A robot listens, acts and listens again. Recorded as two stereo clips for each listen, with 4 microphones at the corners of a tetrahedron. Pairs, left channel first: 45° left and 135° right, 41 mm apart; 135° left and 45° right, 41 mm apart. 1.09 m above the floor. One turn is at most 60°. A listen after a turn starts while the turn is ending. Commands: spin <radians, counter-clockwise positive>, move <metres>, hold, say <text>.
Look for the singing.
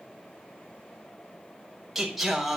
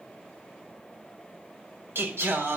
spin -0.87
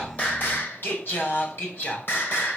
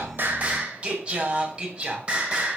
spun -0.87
spin 0.35
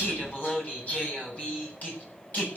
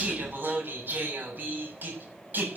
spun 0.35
say Found it: singing, straight ahead.